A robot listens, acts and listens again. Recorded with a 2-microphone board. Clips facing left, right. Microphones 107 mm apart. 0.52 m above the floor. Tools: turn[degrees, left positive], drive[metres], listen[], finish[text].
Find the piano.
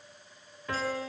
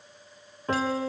Thought: The piano: about 35° right or 145° right.
Action: turn[-35]
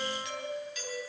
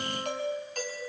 Action: listen[]
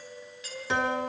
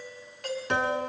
Action: finish[Found it: a piano, straight ahead.]